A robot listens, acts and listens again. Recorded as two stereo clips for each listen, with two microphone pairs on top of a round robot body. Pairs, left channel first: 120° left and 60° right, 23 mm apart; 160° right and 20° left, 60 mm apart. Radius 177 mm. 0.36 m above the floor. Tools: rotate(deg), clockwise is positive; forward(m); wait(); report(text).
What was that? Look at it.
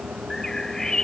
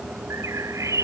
rotate(-55)
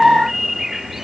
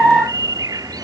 rotate(-20)
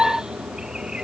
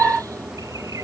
wait()
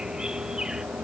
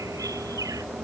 wait()
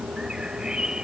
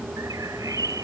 report("I heard a bird from this way, but can't make it out now.")